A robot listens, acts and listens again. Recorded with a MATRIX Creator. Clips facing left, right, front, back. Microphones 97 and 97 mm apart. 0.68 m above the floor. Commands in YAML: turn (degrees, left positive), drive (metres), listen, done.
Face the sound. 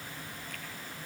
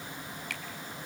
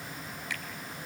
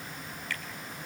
turn: -75
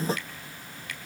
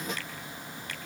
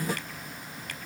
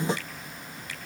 turn: -30
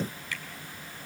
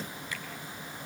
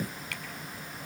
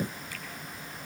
listen: true
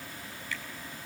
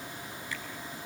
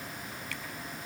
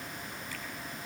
listen: true
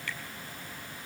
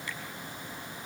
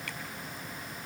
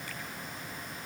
done: "I heard a finger snap from this way, but can't make it out now."